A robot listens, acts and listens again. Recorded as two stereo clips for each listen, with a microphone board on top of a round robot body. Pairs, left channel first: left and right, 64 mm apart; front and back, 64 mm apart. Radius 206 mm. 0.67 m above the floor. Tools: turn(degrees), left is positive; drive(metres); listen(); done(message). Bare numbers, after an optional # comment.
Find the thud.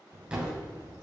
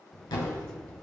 # The thud: 15° right.
turn(-15)
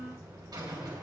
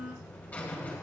done("Facing where the thud came from. I can't hear it now.")